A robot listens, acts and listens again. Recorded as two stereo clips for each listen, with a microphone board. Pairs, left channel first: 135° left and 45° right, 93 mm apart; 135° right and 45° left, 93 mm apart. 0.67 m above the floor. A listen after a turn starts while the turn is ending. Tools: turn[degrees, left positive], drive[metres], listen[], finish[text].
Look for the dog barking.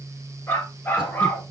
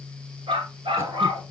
Thought: The dog barking: 65° left.
Action: turn[65]
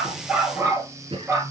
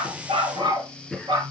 Thought: The dog barking is now 15° left.
Action: turn[15]
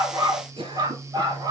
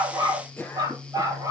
Action: finish[Facing the dog barking.]